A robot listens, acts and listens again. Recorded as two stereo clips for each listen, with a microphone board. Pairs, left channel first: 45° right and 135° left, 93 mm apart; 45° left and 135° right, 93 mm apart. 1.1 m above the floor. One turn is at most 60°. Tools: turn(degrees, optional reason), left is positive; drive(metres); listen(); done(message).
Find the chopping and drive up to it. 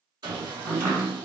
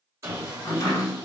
turn(degrees=60, reason="The chopping: 85° left.")
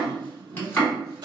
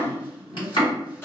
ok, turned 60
turn(degrees=20, reason="The chopping is now 20° left.")
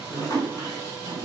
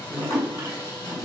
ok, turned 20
drive(metres=1.0)
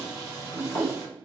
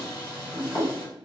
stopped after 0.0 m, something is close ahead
done("Blocked. The chopping is further on, straight ahead.")